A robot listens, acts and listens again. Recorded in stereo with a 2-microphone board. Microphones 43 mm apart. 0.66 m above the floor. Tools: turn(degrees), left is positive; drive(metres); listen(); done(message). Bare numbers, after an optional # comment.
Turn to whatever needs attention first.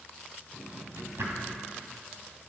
listen()
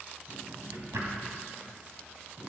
listen()
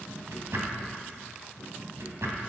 done("I can't make out anything urgent, only a drawer.")